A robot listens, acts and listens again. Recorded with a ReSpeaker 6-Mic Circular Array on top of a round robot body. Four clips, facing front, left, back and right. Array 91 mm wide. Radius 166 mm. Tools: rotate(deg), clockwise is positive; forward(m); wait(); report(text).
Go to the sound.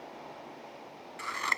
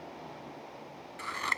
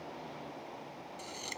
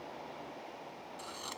rotate(-40)
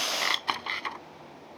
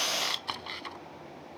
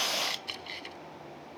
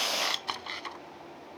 forward(1.0)
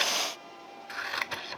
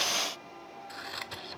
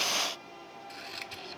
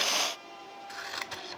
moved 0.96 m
forward(1.0)
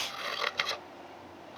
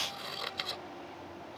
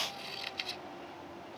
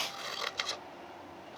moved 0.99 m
rotate(10)
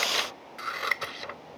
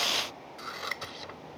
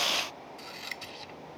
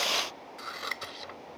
forward(1.0)
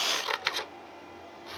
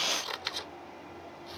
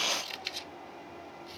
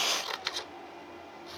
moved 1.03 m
forward(1.0)
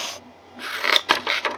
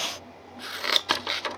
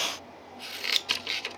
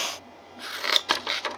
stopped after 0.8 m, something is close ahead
report("I am next to the scissors.")